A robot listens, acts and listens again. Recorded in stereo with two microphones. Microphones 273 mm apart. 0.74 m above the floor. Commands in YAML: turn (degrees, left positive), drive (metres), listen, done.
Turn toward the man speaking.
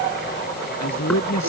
turn: 90
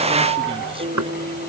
listen: true
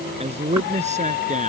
turn: -25
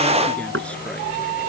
listen: true
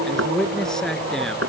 done: "Facing the man speaking."